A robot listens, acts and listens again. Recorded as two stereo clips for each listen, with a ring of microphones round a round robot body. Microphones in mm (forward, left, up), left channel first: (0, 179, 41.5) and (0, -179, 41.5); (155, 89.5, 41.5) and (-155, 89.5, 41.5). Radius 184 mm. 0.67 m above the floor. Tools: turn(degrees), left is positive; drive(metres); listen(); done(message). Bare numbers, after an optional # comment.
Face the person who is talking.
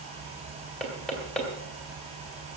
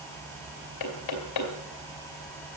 listen()
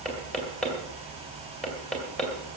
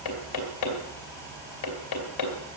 listen()
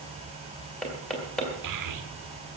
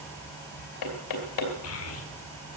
# The child speaking: 50° right.
turn(-50)
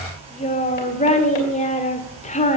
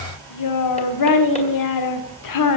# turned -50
# The child speaking is now 20° left.
turn(20)
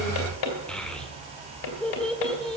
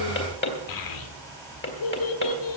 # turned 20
done("Facing the child speaking, 1 to 2 m away.")